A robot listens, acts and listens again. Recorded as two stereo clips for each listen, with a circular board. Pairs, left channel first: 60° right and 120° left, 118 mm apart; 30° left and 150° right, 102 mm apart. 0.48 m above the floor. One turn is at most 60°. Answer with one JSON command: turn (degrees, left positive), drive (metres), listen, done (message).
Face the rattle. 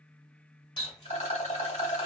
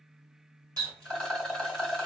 {"turn": -55}
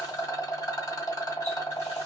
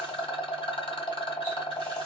{"done": "Facing the rattle."}